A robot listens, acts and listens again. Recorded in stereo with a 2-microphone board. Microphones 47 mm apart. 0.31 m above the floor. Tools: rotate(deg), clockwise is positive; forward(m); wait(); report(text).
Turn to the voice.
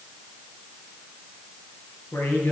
rotate(-70)
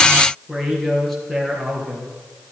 report("Facing the man speaking.")